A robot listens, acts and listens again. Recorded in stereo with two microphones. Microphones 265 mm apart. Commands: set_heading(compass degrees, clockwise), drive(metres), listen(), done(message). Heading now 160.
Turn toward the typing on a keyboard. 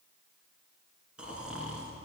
listen()
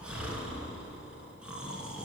listen()
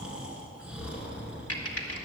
set_heading(100)
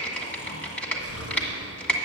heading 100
done("Found it: typing on a keyboard, straight ahead, 1 to 2 m away.")